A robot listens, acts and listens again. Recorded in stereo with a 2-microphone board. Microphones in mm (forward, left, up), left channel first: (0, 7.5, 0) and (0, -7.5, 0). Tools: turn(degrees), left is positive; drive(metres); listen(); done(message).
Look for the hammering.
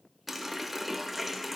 listen()
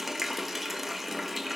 listen()
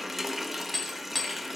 turn(degrees=25)
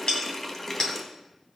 turn(degrees=125)
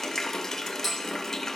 done("Facing the hammering, 2 to 4 m away.")